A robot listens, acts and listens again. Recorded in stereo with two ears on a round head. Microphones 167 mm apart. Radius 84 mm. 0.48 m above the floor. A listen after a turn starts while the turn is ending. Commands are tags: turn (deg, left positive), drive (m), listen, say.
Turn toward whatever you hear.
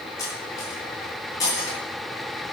<turn deg="20"/>
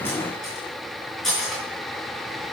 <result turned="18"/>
<say>Found it: cutlery clinking, straight ahead.</say>